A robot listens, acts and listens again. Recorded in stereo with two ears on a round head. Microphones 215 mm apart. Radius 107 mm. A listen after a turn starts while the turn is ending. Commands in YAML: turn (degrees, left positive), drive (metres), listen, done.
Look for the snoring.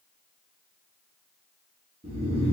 turn: -25
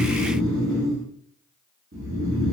turn: -130
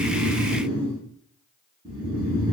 turn: -20
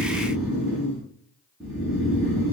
done: "Facing the snoring, 1 to 2 m away."